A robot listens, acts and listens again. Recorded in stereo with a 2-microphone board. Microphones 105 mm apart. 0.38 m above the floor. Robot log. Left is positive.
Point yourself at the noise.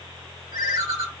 note: The ringtone: about 55° right or 125° right.
cmd yaw -55
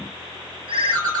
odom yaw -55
note: So it is at 60° right.
cmd yaw -60
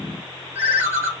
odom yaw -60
note: The ringtone is now 25° right.
cmd yaw -25
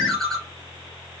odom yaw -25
end: Found it: a ringtone, straight ahead.